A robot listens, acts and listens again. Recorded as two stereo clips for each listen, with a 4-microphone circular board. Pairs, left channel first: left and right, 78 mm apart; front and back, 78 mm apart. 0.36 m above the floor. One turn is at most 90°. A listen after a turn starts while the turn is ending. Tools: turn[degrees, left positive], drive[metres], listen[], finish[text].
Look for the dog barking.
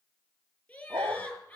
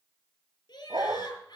Thought: The dog barking: 145° right.
Action: turn[-90]
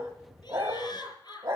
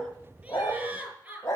Thought: The dog barking is now 65° right.
Action: turn[-65]
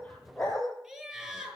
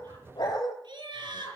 Thought: The dog barking is now 10° left.
Action: turn[10]
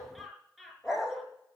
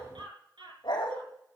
Action: finish[Facing the dog barking, over 4 m away.]